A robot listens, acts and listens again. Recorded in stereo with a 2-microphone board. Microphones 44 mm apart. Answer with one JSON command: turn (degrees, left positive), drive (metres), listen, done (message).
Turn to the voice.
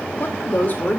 {"turn": 40}
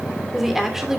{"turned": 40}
{"turn": -10}
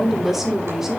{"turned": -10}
{"turn": -10}
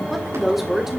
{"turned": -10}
{"turn": -10}
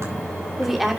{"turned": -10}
{"done": "Facing the woman speaking, 2 to 4 m away."}